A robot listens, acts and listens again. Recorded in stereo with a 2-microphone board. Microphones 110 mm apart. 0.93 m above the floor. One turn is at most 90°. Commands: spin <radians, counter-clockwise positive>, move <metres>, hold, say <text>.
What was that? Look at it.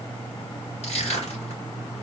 spin 1.57
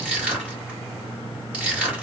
spin -0.17
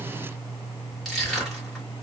say Facing the crushing.